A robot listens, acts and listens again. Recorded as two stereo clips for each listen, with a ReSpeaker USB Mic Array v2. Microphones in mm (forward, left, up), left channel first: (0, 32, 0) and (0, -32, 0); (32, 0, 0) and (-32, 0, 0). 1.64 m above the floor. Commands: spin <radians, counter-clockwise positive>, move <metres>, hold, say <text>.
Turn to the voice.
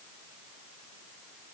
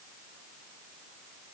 hold
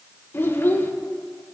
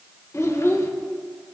spin 0.70
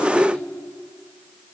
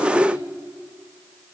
hold
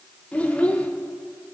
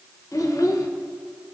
spin 0.35
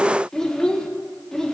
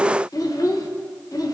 spin 0.17
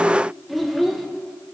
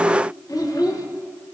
say Found it: a child speaking, straight ahead, 1 to 2 m away.